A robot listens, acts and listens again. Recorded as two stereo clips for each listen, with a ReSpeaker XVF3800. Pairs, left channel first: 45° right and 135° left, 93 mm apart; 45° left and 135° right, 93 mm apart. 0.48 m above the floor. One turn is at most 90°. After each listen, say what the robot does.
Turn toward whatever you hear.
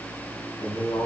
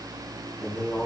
Turn 55° right.
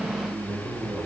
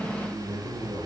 Turn 15° left.
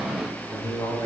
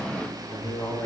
Facing the man speaking.